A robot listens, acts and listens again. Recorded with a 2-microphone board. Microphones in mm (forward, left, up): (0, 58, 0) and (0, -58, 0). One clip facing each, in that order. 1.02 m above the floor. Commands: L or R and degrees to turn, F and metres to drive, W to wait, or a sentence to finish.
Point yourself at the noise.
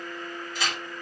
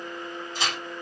R30
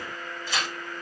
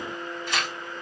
R120
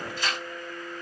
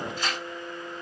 R50
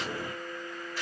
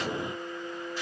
R20
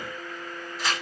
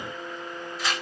Facing the tearing paper.